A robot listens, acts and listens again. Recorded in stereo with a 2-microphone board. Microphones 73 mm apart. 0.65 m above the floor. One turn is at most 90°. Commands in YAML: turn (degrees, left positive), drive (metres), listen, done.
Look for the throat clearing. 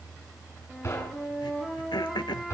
turn: 90
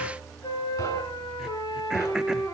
listen: true
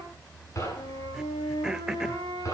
turn: -10
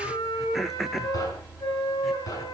done: "Facing the throat clearing."